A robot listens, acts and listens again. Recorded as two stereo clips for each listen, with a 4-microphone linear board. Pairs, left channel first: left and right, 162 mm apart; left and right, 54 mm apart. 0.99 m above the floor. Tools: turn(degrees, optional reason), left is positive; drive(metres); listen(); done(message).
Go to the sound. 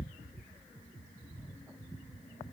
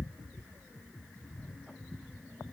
listen()
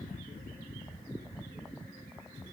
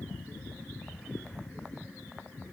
listen()
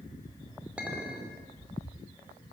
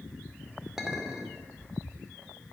turn(degrees=-30)
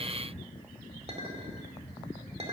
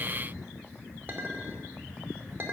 turn(degrees=-140, reason="So it is at 140° right.")
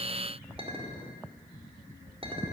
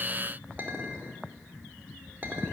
turn(degrees=-35, reason="The clink is now 35° right.")
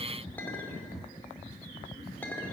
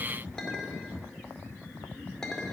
turn(degrees=10, reason="The clink is now 10° left.")
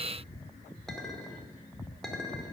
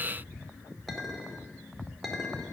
drive(metres=1.0)
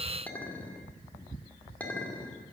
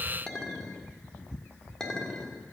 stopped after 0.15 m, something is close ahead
turn(degrees=10, reason="The clink is now 10° left.")
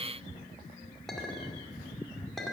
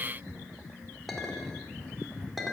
done("Something is in my way. I am facing the clink but have not reached it.")